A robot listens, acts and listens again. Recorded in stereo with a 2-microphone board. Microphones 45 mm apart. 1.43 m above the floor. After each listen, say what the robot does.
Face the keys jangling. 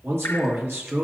Keep listening.
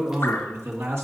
Keep listening.
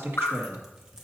I can't make out keys jangling, only dripping and a man speaking.